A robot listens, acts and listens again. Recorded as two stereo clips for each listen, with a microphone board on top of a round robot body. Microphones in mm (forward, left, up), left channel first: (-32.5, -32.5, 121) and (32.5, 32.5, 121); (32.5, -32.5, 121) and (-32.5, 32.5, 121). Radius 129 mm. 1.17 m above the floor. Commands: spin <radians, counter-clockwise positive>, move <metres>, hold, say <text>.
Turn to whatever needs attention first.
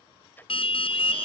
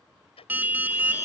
spin -2.71
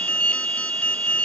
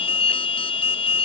spin -1.05
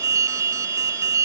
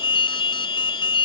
spin -0.17
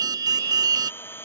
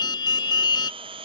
say Found it: an alarm, straight ahead.